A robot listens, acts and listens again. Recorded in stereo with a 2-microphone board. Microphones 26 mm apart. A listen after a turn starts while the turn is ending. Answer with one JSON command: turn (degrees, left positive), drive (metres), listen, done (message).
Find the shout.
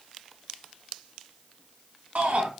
{"turn": -70}
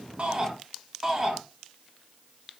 {"turn": -20}
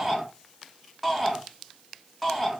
{"done": "Found it: a shout, straight ahead, 2 to 4 m away."}